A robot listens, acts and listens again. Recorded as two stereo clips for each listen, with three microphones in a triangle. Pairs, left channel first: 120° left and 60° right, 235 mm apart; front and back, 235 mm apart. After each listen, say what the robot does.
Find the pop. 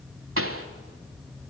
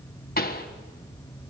Turn 45° right.
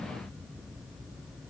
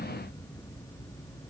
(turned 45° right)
I heard a pop from this way, but can't make it out now.